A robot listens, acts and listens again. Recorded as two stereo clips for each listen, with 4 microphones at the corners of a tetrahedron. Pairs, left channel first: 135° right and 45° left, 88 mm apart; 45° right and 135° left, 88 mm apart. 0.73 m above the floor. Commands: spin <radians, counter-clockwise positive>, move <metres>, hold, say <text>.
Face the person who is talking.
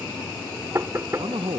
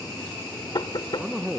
spin 0.87
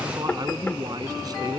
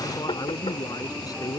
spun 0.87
say Found it: a man speaking, straight ahead.